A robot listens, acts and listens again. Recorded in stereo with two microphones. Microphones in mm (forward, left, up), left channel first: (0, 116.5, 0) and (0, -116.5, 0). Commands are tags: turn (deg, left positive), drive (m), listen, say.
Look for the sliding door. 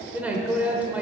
<listen/>
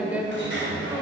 <turn deg="-55"/>
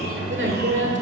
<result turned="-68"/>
<turn deg="-45"/>
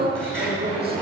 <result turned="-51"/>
<say>Found it: a sliding door, straight ahead, 2 to 4 m away.</say>